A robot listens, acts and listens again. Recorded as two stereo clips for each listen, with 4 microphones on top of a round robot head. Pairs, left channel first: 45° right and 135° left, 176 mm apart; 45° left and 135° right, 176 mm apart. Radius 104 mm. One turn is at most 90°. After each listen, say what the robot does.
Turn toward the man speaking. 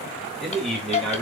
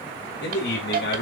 Turn 45° left.
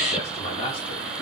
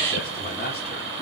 Turn 15° left.
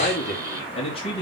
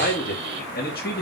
Turn 15° left.
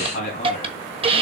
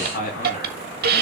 Found it: a man speaking, straight ahead, 2 to 4 m away.